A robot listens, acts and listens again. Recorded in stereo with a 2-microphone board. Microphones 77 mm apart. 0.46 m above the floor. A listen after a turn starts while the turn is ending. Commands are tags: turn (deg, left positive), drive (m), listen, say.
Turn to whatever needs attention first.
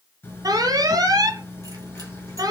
<turn deg="-55"/>
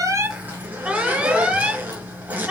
<turn deg="-20"/>
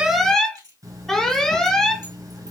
<say>Found it: an alarm, straight ahead.</say>